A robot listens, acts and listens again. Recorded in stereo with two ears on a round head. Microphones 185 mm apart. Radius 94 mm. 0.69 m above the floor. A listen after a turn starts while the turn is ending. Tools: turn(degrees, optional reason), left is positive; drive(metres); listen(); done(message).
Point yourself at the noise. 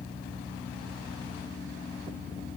listen()
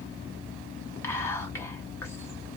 turn(degrees=30)
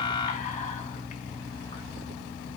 turn(degrees=135, reason="So it is at 135° left.")
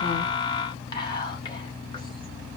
turn(degrees=25, reason="The whispering is now 25° left.")
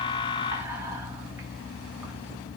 listen()
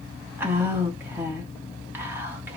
turn(degrees=-10, reason="The whispering is now 10° right.")
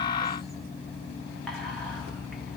listen()
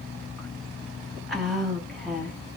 done("Facing the whispering, 1 to 2 m away.")